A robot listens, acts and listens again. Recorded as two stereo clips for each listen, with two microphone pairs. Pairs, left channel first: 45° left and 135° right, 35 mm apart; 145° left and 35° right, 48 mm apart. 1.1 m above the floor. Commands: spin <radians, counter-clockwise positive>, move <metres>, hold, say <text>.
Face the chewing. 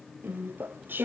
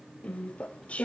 spin -2.62
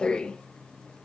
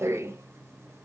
spin -0.26
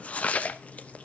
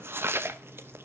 say Found it: chewing, straight ahead, under 1 m away.